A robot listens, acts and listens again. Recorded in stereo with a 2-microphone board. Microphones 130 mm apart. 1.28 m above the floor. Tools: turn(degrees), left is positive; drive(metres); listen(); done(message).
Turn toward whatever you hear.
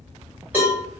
turn(degrees=-30)
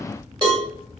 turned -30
turn(degrees=-135)
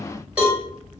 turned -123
turn(degrees=-10)
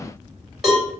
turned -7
done("Found it: a cowbell, straight ahead.")